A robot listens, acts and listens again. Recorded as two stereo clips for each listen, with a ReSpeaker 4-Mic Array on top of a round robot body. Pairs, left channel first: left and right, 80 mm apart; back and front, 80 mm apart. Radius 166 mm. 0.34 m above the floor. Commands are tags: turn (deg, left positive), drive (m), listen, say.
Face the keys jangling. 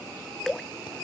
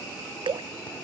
<listen/>
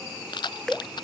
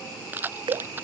<turn deg="65"/>
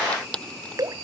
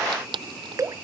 <turn deg="15"/>
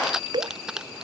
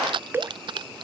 <turn deg="-10"/>
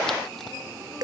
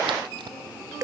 <listen/>
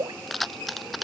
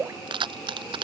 <say>Facing the keys jangling.</say>